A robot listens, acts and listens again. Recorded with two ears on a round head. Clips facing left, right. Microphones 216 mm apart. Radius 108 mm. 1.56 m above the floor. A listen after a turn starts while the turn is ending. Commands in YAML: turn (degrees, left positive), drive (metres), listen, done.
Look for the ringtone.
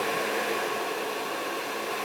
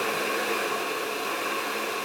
listen: true
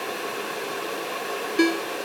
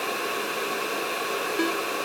turn: 40
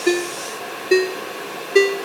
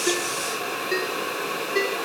turn: 105
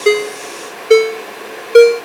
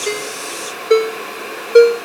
turn: 45
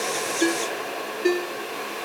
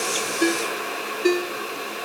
turn: -10
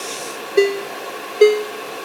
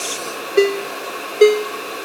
done: "Found it: a ringtone, straight ahead."